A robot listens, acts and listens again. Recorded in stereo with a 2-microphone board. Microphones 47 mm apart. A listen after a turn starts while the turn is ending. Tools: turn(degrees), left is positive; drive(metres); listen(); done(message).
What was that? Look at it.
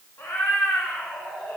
turn(degrees=70)
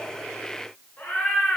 turn(degrees=30)
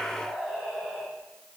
done("Found it: a cat meowing, straight ahead, 2 to 4 m away.")